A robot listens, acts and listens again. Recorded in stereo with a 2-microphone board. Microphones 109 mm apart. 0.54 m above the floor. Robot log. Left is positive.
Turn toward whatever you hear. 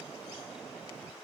cmd idle
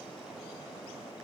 cmd idle
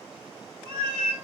note: The cat meowing: about 70° right or 110° right.
cmd yaw -70
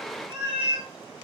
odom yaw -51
note: So it is at 50° right.
cmd yaw -50
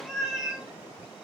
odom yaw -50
end: Facing the cat meowing.